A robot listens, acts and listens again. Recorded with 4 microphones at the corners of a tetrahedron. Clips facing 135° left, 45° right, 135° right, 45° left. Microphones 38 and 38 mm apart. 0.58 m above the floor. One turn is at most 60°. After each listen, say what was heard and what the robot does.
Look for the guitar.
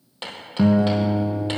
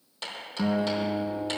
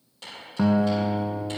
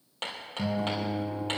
The guitar: 155° right. Turn 60° right.
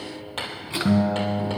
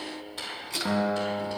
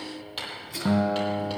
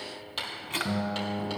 The guitar is now 90° right. Turn 60° right.
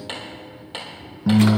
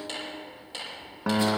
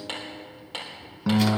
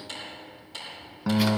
The guitar is now 40° right. Turn 40° right.
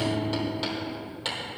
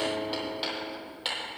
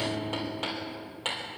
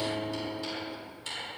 Facing the guitar.